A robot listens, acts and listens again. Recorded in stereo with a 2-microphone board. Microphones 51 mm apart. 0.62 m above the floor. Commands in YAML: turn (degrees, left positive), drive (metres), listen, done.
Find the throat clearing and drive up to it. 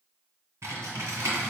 listen: true
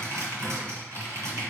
listen: true
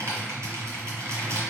done: "I can't make out throat clearing, only typing on a keyboard."